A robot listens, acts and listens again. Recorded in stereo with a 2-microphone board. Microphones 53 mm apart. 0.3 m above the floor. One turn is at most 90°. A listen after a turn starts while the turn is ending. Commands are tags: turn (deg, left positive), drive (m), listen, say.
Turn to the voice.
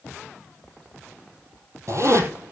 <listen/>
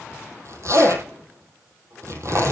<listen/>
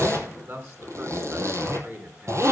<turn deg="-50"/>
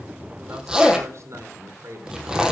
<turn deg="-75"/>
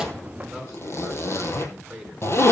<turn deg="-10"/>
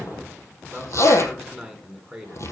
<say>Found it: a man speaking, straight ahead, 2 to 4 m away.</say>